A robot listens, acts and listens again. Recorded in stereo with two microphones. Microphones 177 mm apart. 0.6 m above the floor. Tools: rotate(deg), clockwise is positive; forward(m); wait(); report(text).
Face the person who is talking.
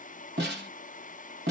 wait()
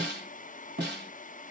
wait()
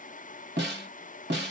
report("I can't make out anyone speaking, only a snare drum.")